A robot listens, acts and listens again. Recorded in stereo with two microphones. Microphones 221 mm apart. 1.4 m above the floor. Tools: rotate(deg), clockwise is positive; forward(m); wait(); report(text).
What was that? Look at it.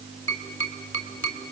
rotate(-65)
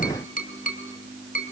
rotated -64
rotate(-40)
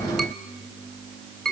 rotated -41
report("Facing the tapping, 2 to 4 m away.")